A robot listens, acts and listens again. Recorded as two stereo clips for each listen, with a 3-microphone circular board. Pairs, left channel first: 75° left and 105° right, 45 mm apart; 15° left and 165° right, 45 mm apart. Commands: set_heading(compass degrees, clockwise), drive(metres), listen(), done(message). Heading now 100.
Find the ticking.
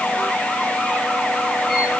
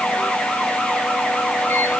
listen()
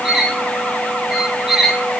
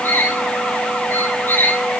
listen()
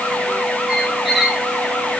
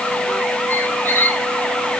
done("I can't make out ticking to turn to.")